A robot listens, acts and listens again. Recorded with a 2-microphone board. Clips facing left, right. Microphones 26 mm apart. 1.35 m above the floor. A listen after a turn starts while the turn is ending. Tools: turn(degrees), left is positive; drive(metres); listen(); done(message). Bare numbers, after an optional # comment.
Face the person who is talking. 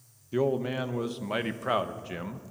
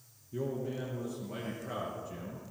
# The man speaking: about 55° left or 125° left.
turn(55)
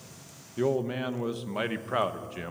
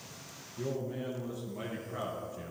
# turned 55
# So it is at 70° left.
turn(70)
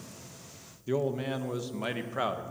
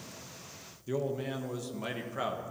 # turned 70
# The man speaking is now 20° left.
turn(20)
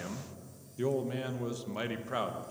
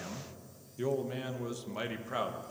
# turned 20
done("Found it: a man speaking, straight ahead.")